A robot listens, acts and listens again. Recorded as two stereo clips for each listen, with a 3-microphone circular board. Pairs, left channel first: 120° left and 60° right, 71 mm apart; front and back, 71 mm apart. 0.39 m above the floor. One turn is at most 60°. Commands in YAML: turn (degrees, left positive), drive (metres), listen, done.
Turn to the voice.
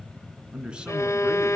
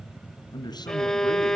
turn: 15
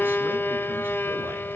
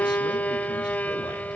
listen: true
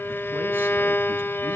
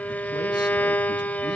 listen: true
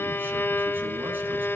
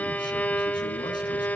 done: "I heard a man speaking from this way, but can't make it out now."